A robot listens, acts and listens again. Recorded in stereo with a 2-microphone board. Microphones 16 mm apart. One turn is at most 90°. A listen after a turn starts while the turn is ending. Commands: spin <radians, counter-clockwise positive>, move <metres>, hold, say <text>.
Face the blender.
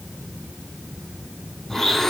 spin 0.35
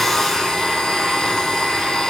spin 1.57
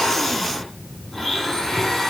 spin 0.44
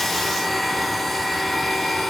spin 0.17
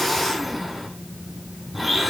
say Facing the blender, over 4 m away.